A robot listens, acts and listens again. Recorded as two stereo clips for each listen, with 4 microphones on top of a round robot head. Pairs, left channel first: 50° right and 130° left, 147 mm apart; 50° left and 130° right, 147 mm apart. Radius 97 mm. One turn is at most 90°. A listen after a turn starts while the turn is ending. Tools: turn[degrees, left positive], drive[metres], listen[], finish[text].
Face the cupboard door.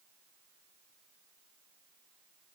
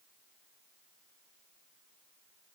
Action: listen[]
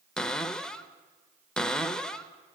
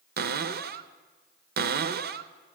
Thought: The cupboard door: 140° right.
Action: turn[-90]
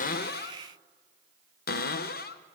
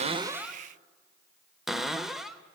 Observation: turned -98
Thought: The cupboard door is now 40° right.
Action: turn[-40]
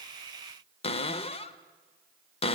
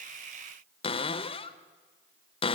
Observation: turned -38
Action: finish[Facing the cupboard door.]